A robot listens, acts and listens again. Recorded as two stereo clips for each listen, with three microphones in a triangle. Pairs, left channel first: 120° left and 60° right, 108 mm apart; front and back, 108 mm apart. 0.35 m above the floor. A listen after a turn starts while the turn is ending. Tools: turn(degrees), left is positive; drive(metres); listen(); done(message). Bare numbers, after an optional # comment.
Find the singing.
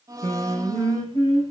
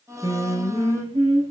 # The singing: 175° left.
turn(175)
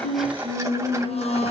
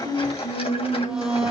# The singing is now 35° left.
turn(35)
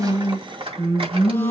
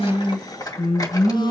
# The singing is now 15° right.
turn(-15)
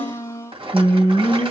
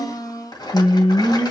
done("Facing the singing, over 4 m away.")